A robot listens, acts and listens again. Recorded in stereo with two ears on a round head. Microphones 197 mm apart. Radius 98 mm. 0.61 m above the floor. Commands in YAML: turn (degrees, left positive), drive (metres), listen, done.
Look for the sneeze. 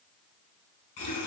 listen: true
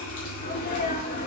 turn: 40
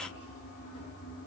listen: true
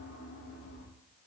done: "I heard a sneeze, but can't make it out now. It was about straight ahead or 100° left."